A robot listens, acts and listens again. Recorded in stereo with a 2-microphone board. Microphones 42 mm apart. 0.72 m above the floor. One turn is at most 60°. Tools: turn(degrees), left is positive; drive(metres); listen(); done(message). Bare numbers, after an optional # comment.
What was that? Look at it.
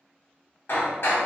# The hammering: about 60° left or 120° left.
turn(60)
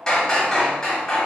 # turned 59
# So it is at 15° left.
turn(15)
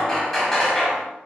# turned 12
done("Facing the hammering, under 1 m away.")